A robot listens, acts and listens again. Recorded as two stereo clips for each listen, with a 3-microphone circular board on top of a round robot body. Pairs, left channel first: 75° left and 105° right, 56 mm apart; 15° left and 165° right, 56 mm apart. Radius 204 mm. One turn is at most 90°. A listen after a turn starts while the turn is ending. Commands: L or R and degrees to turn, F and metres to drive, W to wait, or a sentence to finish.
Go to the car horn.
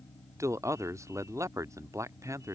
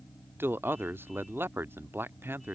W
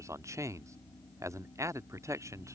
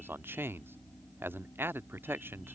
W
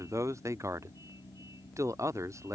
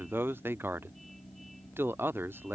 I can't make out a car horn to turn to.